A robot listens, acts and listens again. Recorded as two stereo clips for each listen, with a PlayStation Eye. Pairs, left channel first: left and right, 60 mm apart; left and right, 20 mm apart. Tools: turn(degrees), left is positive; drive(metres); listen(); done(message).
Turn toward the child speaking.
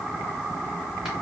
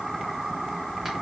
listen()
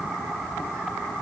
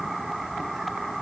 listen()
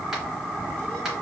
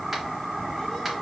done("I can't make out a child speaking.")